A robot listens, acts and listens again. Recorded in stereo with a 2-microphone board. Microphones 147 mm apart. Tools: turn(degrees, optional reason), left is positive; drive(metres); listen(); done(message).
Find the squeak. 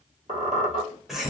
turn(degrees=-55, reason="The squeak: about 55° right or 125° right.")
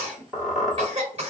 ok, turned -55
done("Facing the squeak, 1 to 2 m away.")